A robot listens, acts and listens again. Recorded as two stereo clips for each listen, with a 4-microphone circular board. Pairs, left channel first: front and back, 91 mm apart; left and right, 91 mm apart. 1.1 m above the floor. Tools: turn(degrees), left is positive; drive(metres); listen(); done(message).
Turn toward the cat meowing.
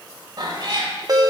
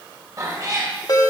turn(degrees=-140)
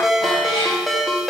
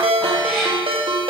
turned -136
listen()
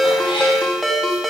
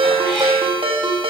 listen()
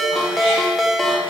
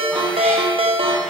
done("I heard a cat meowing from this way, but can't make it out now.")